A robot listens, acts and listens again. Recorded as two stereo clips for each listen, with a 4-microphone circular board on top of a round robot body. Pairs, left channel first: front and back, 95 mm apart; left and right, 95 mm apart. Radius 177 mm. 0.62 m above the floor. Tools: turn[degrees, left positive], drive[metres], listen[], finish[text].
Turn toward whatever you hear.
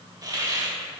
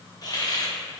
Thought: The hiss: 135° left.
Action: turn[135]
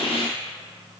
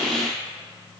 Action: listen[]
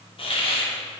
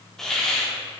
Action: finish[Found it: a hiss, straight ahead, 2 to 4 m away.]